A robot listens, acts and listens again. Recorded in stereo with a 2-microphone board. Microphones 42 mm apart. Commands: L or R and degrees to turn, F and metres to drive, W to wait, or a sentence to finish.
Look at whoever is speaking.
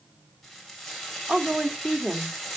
R35
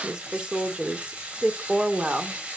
R35
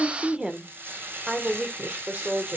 R30
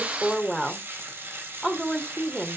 Facing the woman speaking.